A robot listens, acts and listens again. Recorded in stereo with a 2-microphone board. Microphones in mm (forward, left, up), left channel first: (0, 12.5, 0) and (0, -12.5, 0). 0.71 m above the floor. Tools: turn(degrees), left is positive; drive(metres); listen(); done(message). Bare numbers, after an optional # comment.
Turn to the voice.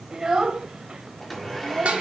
# The child speaking: about 45° right or 135° right.
turn(-45)
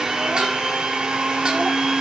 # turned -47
listen()
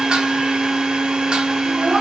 listen()
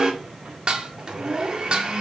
# So it is at 45° right.
turn(-45)
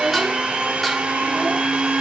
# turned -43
listen()
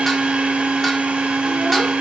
listen()
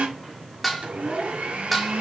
done("Facing the child speaking, 2 to 4 m away.")